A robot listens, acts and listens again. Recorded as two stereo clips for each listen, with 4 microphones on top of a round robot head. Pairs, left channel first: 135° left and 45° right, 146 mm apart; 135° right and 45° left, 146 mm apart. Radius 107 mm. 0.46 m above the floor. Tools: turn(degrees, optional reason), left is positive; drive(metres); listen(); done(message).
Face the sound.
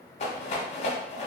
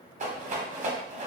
turn(degrees=85, reason="The rattle: 85° left.")
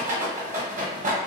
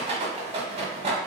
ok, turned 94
done("Found it: a rattle, straight ahead, 1 to 2 m away.")